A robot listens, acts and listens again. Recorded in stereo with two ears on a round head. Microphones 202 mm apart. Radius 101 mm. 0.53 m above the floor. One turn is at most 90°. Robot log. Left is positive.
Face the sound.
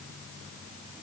cmd idle
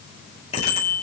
note: The bicycle bell: about 30° left or 150° left.
cmd yaw +30
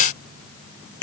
note: So it is at 120° left.
cmd yaw +90
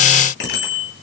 note: The bicycle bell is now 50° left.
cmd yaw +50
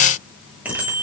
end: Found it: a bicycle bell, straight ahead, over 4 m away.